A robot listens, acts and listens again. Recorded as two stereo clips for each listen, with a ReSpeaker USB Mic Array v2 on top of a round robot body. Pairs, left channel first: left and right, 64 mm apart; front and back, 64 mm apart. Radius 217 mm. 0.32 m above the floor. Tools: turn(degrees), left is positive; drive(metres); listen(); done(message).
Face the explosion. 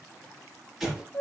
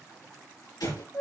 done("Found it: an explosion, straight ahead.")